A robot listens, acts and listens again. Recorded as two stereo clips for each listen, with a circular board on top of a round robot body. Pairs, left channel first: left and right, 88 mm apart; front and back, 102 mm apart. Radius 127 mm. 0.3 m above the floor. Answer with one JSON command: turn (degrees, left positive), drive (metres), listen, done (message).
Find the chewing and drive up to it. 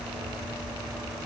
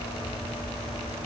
{"listen": true}
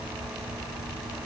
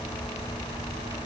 {"listen": true}
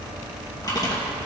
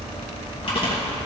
{"turn": 40}
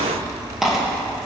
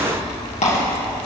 {"drive": 1.0}
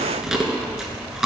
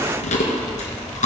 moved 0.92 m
{"drive": 1.0}
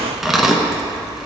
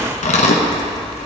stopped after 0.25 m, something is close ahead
{"done": "Arrived at the chewing, straight ahead."}